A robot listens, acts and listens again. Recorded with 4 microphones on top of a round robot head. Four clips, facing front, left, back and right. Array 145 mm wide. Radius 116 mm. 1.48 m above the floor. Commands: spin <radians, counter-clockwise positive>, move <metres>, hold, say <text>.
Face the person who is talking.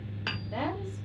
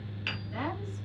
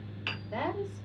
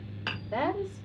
spin -1.40
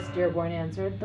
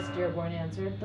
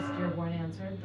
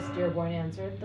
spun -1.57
spin 0.26
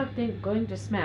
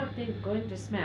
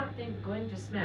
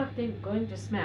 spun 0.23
spin 0.17
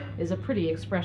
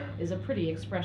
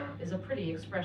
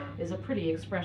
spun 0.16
say Facing the woman speaking.